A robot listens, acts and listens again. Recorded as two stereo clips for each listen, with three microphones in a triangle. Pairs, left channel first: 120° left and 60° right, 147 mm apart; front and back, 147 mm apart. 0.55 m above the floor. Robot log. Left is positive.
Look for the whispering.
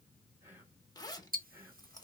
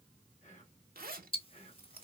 note: The whispering: 15° left.
cmd yaw +15
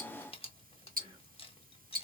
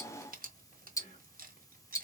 end: Found it: whispering, straight ahead.